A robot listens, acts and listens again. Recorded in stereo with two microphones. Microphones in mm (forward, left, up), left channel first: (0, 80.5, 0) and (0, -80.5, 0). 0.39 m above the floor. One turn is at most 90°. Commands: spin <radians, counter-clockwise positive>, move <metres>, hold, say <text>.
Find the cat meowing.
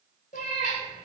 spin 0.96
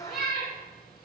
spin 1.22
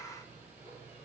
hold
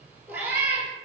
spin -0.17
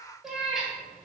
say Found it: a cat meowing, straight ahead, under 1 m away.